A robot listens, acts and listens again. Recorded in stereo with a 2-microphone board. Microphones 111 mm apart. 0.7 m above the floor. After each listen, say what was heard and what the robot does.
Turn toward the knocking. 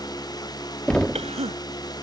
Turn 30° left.
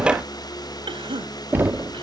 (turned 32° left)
So it is at 20° right. Turn 20° right.
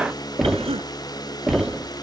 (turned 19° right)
Found it: knocking, straight ahead.